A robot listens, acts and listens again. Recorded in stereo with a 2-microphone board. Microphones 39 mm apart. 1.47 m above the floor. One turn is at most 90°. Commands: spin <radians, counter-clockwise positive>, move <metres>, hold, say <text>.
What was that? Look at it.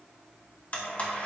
spin 0.61
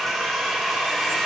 say Found it: a blender, straight ahead, 1 to 2 m away.